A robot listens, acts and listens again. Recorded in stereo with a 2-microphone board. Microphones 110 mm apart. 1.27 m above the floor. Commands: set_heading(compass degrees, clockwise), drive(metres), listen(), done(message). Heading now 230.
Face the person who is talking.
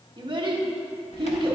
set_heading(275)
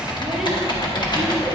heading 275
listen()
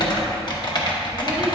listen()
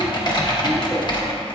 done("I heard a child speaking, but can't make it out now. It was about straight ahead or 90° right.")